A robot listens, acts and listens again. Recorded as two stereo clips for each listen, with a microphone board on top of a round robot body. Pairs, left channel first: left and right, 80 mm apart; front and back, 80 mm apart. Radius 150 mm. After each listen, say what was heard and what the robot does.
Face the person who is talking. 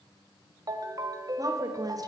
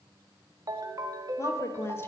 The woman speaking: 55° right. Turn 55° right.
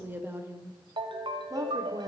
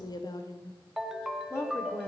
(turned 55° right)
The woman speaking is now 60° right. Turn 60° right.
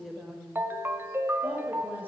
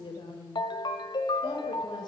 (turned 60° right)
The woman speaking is now 25° right. Turn 25° right.
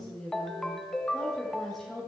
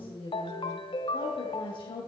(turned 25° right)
Found it: a woman speaking, straight ahead, 2 to 4 m away.